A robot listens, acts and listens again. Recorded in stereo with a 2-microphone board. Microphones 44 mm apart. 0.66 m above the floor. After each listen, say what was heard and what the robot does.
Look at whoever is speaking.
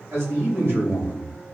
The man speaking: about 60° right or 120° right. Turn 60° right.
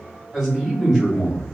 Found it: a man speaking, straight ahead.